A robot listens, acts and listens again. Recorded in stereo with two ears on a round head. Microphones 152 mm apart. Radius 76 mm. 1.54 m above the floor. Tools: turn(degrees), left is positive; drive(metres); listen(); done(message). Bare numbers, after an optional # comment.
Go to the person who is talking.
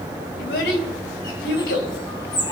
turn(90)
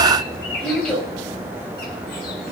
drive(1.0)
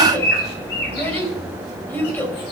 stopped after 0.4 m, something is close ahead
# The child speaking is now 10° left.
turn(10)
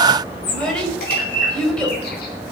done("Blocked. The child speaking is further on, straight ahead.")